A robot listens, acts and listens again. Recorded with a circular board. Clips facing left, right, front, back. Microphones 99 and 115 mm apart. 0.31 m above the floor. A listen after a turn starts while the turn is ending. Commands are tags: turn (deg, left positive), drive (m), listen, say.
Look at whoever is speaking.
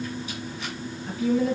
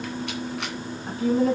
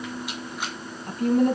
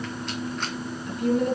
<turn deg="-40"/>
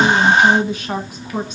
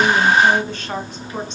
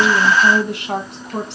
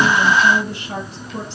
<turn deg="10"/>
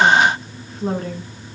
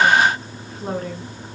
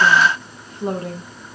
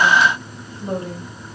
<say>Facing the woman speaking, 2 to 4 m away.</say>